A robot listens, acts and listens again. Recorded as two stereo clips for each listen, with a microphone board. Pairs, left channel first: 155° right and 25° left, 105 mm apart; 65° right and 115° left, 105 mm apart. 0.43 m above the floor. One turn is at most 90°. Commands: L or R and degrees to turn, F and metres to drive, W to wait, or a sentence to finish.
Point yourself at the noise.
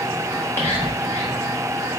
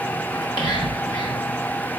R90
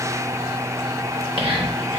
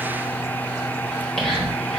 L15
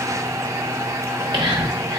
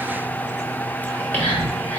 Facing the whispering, 1 to 2 m away.